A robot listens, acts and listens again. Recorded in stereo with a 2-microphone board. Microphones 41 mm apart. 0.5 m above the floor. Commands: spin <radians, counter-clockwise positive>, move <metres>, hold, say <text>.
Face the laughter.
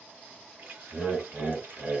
spin -0.52
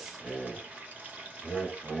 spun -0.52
say Found it: laughter, straight ahead.